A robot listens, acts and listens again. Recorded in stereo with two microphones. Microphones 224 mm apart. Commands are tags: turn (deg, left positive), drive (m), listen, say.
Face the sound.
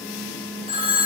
<turn deg="-25"/>
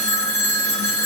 <turn deg="-130"/>
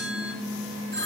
<turn deg="-55"/>
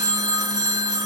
<turn deg="-20"/>
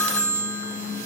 <say>Facing the phone ringing, 1 to 2 m away.</say>